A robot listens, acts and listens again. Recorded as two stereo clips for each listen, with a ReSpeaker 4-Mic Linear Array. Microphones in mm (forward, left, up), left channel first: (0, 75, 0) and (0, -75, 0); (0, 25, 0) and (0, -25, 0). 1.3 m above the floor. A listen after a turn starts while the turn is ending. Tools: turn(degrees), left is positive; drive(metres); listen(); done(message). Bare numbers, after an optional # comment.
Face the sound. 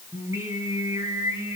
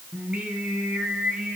# The singing: about 20° right or 160° right.
turn(-20)
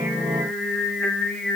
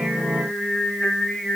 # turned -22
done("Found it: singing, straight ahead, 1 to 2 m away.")